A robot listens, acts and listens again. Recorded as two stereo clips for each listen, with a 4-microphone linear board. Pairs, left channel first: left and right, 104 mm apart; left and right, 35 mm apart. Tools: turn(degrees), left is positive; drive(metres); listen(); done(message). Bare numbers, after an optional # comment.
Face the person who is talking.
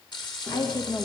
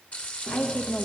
# The woman speaking: about 35° left or 145° left.
turn(35)
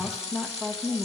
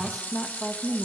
# So it is at 10° right.
turn(-10)
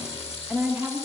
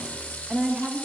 # The woman speaking is now 20° right.
turn(-20)
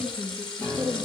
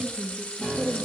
# The woman speaking is now 15° right.
turn(-15)
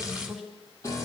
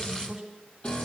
done("Facing the woman speaking, 2 to 4 m away.")